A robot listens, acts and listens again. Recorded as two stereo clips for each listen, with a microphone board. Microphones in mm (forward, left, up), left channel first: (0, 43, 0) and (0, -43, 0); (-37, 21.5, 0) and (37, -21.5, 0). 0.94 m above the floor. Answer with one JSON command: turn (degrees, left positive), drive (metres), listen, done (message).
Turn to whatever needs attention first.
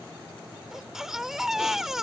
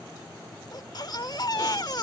{"turn": -175}
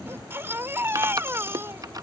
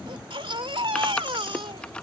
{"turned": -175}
{"turn": -25}
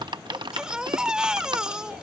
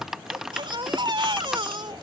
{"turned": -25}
{"turn": -10}
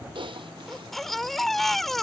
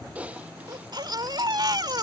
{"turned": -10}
{"done": "Facing the baby crying."}